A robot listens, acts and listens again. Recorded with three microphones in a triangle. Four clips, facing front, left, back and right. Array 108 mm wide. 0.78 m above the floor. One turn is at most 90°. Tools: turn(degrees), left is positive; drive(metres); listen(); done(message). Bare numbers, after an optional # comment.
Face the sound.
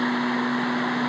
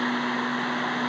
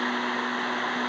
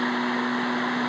listen()
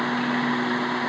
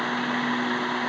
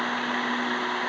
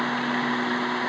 listen()
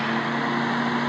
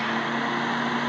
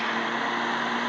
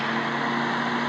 done("I can't make out anything to turn to.")